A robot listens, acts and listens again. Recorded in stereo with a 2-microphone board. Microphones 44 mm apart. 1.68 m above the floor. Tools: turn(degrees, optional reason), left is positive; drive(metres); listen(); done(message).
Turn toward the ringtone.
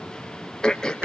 listen()
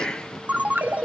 turn(degrees=-40, reason="The ringtone: about 40° right or 140° right.")
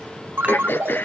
turn(degrees=-100, reason="So it is at 100° right.")
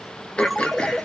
done("Facing the ringtone.")